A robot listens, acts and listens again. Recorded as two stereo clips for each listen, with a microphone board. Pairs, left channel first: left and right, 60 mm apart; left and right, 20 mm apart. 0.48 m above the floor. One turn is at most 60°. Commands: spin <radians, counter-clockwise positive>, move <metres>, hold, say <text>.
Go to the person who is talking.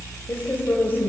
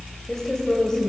spin 0.61
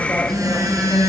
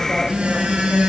hold
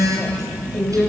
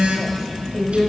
move 1.0
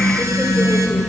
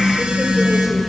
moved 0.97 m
hold
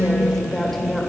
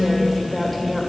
move 1.0
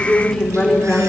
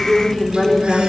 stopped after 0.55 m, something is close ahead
spin 0.17
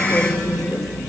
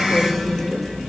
hold
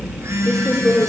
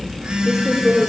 say Arrived at the woman speaking, straight ahead.